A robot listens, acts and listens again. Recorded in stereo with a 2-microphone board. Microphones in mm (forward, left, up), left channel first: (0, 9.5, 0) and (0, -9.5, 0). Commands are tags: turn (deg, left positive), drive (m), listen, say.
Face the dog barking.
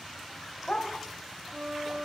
<turn deg="70"/>
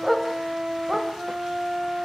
<say>Found it: a dog barking, straight ahead.</say>